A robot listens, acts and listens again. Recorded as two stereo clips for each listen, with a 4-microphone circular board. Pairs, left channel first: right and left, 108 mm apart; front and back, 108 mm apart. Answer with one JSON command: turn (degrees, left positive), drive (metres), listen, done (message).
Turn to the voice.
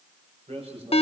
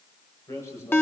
{"turn": 65}
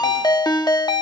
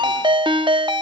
{"listen": true}
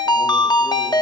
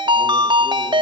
{"listen": true}
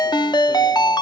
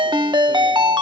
{"done": "I heard a man speaking from this way, but can't make it out now."}